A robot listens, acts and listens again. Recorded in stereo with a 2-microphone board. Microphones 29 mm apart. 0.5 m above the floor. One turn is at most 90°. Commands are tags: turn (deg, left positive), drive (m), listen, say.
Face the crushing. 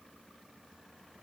<listen/>
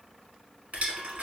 <turn deg="-70"/>
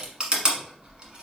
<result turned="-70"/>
<turn deg="-35"/>
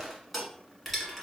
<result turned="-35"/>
<say>Found it: crushing, straight ahead.</say>